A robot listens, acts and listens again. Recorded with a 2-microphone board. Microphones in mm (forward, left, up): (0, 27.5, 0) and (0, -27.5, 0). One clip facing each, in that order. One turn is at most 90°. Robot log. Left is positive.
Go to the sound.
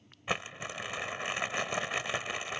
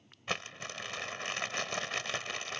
cmd yaw +30
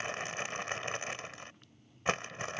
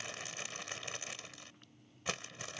note: So it is at 135° left.
cmd yaw +90
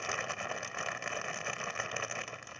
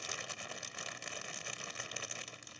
note: The crumpling is now 45° left.
cmd yaw +45
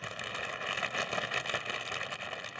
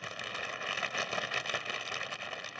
cmd fwd 1.0
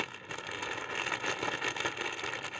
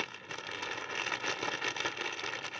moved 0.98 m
note: The crumpling is now 10° left.
cmd yaw +10
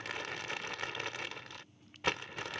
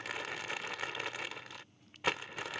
cmd fwd 1.0
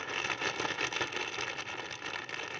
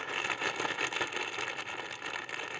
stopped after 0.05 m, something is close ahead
note: The crumpling is now 10° right.
cmd yaw -10
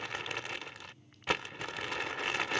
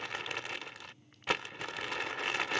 end: I am next to the crumpling.